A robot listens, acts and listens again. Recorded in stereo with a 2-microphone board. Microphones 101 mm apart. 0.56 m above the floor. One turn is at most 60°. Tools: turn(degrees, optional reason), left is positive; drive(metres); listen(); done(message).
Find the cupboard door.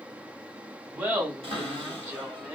turn(degrees=-60, reason="The cupboard door: about 70° right or 110° right.")
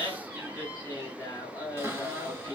turn(degrees=-25, reason="So it is at 25° right.")
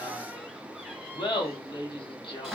done("Found it: a cupboard door, straight ahead, 2 to 4 m away.")